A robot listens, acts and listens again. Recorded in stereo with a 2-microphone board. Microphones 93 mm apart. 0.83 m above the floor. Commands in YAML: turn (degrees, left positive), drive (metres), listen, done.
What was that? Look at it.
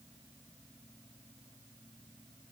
listen: true
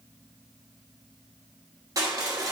turn: -40
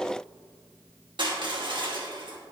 turn: -95
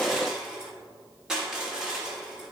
turn: -10
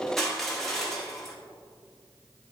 done: "Found it: crushing, straight ahead."